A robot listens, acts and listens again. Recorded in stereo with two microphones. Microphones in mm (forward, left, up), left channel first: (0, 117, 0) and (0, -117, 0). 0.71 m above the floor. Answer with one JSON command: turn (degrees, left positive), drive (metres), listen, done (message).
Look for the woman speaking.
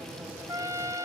{"listen": true}
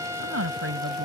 {"turn": -90}
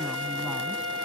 {"listen": true}
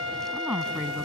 {"done": "Found it: a woman speaking, straight ahead."}